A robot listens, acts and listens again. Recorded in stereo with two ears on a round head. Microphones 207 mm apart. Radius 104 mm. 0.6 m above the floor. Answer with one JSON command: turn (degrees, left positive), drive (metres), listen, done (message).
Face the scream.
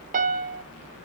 {"listen": true}
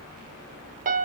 {"listen": true}
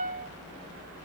{"done": "I can't make out a scream, only a piano."}